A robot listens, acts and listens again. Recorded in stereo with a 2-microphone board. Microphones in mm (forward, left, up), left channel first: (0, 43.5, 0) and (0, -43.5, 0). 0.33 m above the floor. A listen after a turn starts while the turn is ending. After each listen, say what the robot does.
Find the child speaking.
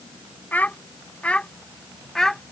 Turn 30° left.
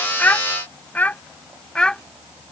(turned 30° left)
Turn 30° left.
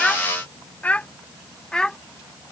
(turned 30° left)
Turn 30° left.
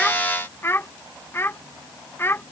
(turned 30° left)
Turn 150° left.
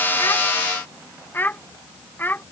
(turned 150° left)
Turn 25° left.
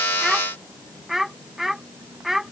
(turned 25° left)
Found it: a child speaking, straight ahead.